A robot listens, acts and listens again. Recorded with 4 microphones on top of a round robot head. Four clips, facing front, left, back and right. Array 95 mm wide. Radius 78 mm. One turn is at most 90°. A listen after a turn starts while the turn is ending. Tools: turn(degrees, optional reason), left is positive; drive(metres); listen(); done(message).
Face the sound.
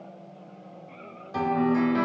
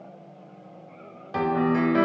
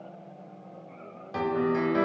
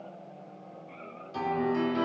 turn(degrees=90, reason="The piano: 100° left.")
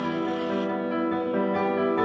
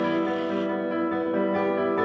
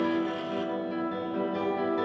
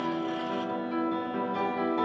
turn(degrees=50, reason="The piano is now 50° left.")
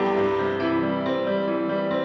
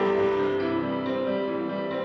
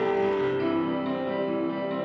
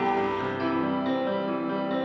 done("Found it: a piano, straight ahead, 1 to 2 m away.")